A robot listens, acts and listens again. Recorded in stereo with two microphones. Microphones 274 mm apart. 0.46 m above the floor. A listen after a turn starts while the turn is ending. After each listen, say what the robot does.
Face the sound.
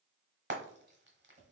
Turn 40° right.
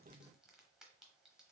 Keep listening.
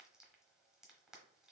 Keep listening.
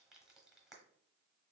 I heard frying, but can't make it out now. It was about straight ahead or 100° right.